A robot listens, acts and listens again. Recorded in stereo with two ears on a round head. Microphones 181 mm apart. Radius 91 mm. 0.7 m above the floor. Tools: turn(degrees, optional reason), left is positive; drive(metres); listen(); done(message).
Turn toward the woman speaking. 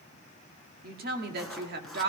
turn(degrees=-55, reason="The woman speaking: about 55° right or 125° right.")
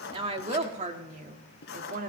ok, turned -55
turn(degrees=-45, reason="So it is at 45° right.")
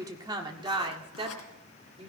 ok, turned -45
turn(degrees=-35, reason="The woman speaking is now 35° right.")
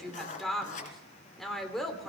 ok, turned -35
done("Facing the woman speaking.")